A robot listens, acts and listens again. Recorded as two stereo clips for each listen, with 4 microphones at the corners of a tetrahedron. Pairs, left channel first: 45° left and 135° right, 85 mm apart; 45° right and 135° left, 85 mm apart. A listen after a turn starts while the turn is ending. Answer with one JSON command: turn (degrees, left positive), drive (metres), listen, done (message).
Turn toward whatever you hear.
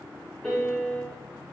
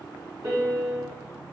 {"turn": 125}
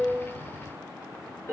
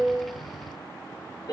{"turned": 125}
{"turn": -15}
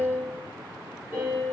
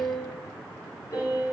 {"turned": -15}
{"done": "Facing the piano, 1 to 2 m away."}